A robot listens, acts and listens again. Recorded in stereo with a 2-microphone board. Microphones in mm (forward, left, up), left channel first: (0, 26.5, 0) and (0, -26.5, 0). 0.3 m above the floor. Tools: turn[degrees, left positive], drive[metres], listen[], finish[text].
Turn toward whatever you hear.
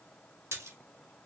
Thought: The splash: about 60° right or 120° right.
Action: turn[-60]
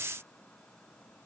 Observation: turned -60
Action: listen[]
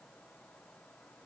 Action: finish[I heard a splash, but can't make it out now. It was about straight ahead or 60° right.]